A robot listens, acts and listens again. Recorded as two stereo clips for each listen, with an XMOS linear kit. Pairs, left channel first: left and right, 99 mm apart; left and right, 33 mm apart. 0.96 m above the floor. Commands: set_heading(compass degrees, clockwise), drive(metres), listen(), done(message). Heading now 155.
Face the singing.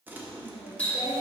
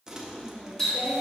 set_heading(85)
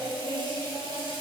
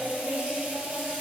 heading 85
set_heading(35)
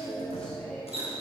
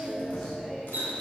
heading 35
set_heading(25)
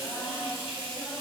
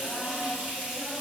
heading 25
set_heading(15)
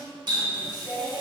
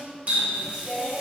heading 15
done("Facing the singing.")